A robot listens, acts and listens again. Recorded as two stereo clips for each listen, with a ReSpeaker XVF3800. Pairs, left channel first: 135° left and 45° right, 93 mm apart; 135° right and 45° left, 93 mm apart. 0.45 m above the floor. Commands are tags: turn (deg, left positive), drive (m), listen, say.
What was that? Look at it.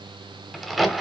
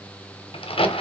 <turn deg="-135"/>
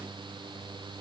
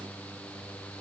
<say>Facing where the crack came from. I can't hear it now.</say>